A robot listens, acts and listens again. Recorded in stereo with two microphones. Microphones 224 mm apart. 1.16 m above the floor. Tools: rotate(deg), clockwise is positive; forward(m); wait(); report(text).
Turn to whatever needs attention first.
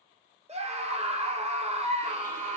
rotate(30)
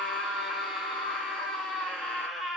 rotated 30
report("Facing the scream.")